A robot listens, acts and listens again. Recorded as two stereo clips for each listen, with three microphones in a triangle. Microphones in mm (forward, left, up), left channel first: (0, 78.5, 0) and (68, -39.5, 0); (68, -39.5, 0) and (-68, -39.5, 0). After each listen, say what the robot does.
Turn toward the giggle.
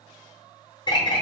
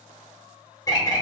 Keep listening.
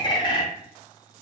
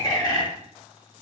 Keep listening.
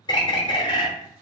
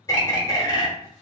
I can't make out a giggle to turn to.